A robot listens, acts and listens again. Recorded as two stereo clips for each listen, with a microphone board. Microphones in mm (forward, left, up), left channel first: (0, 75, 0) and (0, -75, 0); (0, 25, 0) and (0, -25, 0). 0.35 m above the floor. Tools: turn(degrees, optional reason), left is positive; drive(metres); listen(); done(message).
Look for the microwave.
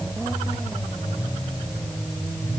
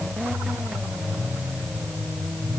listen()
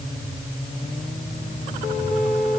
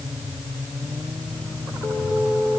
listen()
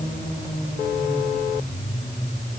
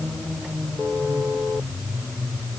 done("I can't make out a microwave to turn to.")